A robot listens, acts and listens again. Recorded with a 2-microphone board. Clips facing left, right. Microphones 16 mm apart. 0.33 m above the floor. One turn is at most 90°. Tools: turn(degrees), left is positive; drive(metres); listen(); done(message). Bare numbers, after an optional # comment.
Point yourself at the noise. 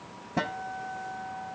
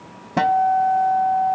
# The guitar: about 40° right or 140° right.
turn(-40)
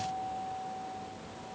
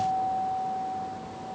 done("Facing the guitar.")